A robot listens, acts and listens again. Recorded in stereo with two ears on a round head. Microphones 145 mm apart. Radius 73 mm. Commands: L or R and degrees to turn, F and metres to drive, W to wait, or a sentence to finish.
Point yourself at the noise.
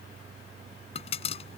L40
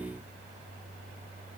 W
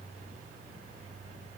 I heard a pop, but can't make it out now. It was about straight ahead or 100° left.